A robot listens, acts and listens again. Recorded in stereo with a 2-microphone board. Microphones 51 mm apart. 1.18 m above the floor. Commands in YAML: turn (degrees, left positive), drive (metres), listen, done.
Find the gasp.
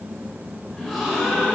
turn: 30
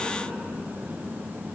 listen: true
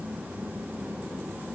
done: "I heard a gasp, but can't make it out now. It was about 25° right or 145° left."